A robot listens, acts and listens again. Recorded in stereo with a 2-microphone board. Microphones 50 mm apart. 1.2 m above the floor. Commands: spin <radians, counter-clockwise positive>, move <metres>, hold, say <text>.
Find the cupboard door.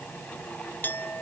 hold
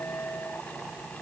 hold
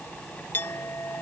say I can't make out a cupboard door, only a clink.